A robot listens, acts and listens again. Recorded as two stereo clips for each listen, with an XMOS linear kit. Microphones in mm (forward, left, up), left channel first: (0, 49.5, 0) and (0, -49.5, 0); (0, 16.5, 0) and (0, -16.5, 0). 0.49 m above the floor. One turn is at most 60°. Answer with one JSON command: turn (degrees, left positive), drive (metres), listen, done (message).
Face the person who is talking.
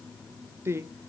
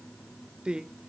{"turn": -25}
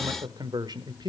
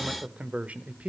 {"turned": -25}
{"turn": -60}
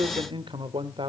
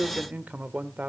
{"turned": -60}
{"turn": -60}
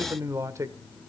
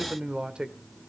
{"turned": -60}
{"turn": -40}
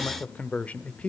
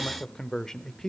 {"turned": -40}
{"turn": 15}
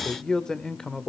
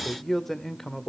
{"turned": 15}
{"turn": 10}
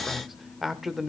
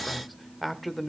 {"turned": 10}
{"done": "Facing the man speaking."}